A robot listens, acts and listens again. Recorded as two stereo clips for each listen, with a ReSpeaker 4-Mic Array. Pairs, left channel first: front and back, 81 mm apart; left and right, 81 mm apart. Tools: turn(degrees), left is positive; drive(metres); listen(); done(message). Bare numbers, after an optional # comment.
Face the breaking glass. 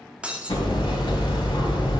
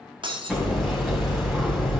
# The breaking glass: 105° right.
turn(-105)
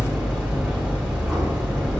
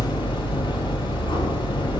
done("Facing where the breaking glass came from. I can't hear it now.")